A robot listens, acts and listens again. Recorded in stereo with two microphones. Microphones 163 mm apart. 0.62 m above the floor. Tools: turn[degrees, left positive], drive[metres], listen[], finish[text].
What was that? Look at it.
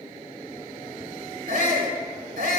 Thought: The shout: about 70° right or 110° right.
Action: turn[-70]
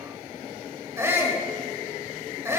Thought: So it is at 20° right.
Action: turn[-20]
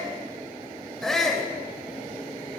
Action: finish[Found it: a shout, straight ahead, 2 to 4 m away.]